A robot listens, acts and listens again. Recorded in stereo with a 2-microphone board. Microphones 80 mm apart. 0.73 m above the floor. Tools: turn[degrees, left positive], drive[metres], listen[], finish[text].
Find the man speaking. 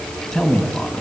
Action: turn[30]
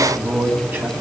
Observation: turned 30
Thought: So it is at 25° right.
Action: turn[-25]
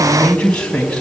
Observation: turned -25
Thought: The man speaking is now 15° left.
Action: turn[15]
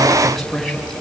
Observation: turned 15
Action: finish[Facing the man speaking, over 4 m away.]